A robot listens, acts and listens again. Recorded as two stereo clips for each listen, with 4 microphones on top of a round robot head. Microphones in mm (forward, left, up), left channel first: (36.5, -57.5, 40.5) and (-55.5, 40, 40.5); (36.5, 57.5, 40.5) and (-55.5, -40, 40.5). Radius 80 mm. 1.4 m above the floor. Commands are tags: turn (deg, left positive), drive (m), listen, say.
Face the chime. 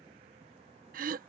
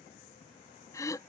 <listen/>
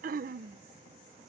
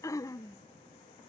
<listen/>
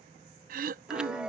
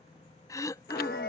<turn deg="50"/>
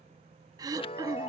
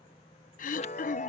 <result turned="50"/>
<say>Facing the chime.</say>